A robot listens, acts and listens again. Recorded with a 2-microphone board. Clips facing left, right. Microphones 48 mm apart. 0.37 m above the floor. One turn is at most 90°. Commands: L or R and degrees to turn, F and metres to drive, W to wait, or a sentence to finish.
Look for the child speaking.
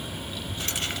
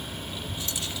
R20
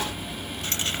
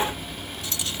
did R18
W
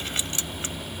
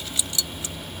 W
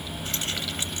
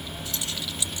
R30
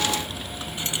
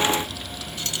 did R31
W
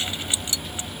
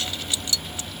W
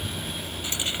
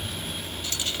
L25
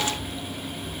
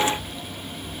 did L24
W
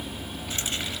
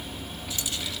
Facing the child speaking.